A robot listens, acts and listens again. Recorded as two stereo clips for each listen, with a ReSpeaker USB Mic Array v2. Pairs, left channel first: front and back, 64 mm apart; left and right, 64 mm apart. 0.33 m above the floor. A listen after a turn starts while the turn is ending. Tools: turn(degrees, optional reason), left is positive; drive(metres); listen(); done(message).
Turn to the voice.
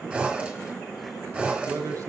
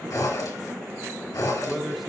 turn(degrees=180, reason="The man speaking: straight behind.")
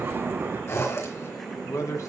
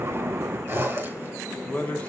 turn(degrees=25, reason="The man speaking is now 25° left.")
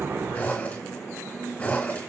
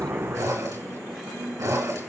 listen()
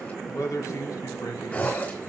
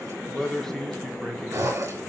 turn(degrees=10, reason="The man speaking is now 10° left.")
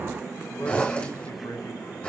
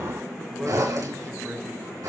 done("Facing the man speaking, 2 to 4 m away.")